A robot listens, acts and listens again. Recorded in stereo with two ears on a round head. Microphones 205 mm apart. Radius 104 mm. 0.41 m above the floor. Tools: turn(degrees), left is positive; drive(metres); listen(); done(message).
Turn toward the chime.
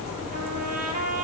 listen()
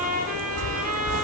turn(degrees=-60)
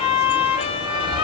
turn(degrees=-25)
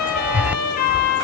turn(degrees=-10)
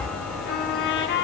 done("Found it: a chime, straight ahead, 1 to 2 m away.")